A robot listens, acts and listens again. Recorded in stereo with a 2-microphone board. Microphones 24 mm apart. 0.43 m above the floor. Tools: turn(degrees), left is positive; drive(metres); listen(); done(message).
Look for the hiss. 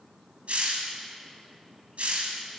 turn(degrees=-70)
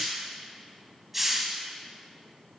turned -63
turn(degrees=-10)
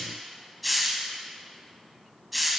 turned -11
done("Facing the hiss, 1 to 2 m away.")